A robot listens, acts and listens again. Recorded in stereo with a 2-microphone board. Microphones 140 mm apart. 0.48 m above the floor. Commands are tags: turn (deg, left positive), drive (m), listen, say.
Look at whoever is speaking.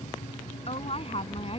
<turn deg="45"/>
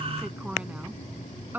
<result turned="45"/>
<turn deg="-15"/>
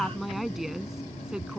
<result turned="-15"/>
<say>Facing the woman speaking.</say>